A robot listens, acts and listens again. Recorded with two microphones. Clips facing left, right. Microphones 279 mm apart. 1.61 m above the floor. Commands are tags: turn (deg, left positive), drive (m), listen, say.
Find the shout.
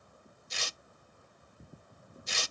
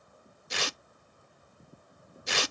<listen/>
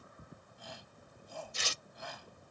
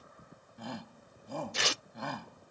<turn deg="-65"/>
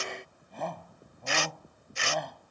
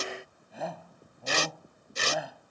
<say>Found it: a shout, straight ahead.</say>